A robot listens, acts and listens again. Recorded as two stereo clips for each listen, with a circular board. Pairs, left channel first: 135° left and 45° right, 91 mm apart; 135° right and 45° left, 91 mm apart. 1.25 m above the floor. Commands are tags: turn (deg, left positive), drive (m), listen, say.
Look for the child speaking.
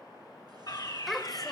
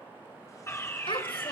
<turn deg="-140"/>
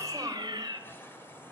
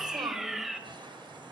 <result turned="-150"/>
<say>Found it: a child speaking, straight ahead.</say>